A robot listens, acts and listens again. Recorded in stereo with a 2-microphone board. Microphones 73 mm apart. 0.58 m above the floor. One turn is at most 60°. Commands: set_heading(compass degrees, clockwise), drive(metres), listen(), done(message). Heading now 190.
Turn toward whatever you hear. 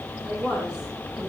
set_heading(220)
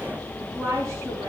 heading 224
set_heading(284)
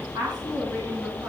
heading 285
set_heading(345)
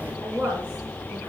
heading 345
set_heading(10)
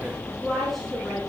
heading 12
done("Facing the woman speaking, over 4 m away.")